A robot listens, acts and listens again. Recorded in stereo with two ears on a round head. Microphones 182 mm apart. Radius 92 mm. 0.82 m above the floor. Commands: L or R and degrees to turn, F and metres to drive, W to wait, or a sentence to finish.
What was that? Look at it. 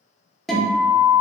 L30
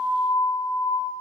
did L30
L145
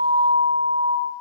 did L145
Found it: a guitar, straight ahead.